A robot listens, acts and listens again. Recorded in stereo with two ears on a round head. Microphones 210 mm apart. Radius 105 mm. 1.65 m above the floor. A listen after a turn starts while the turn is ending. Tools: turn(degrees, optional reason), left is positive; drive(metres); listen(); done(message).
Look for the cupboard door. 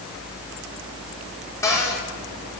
turn(degrees=30)
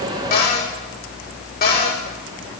turn(degrees=140, reason="So it is at 140° left.")
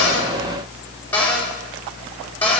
turn(degrees=10, reason="The cupboard door is now 10° left.")
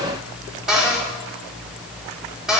done("Facing the cupboard door.")